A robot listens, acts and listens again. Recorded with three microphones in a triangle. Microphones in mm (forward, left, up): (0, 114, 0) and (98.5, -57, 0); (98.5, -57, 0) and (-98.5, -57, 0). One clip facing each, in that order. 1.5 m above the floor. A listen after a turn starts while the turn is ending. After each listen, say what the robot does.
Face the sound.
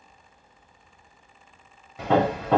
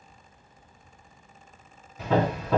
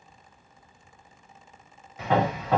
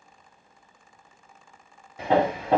Turn 120° left.
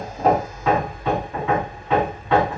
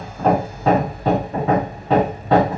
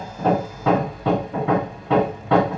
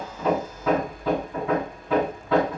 Found it: hammering, straight ahead, 1 to 2 m away.